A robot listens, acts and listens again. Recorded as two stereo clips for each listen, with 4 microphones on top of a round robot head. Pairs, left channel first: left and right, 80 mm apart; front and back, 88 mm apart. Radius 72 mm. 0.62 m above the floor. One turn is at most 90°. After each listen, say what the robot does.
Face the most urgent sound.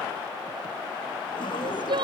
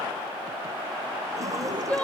Turn 75° right.
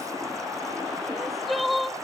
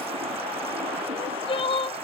Found it: crying, straight ahead.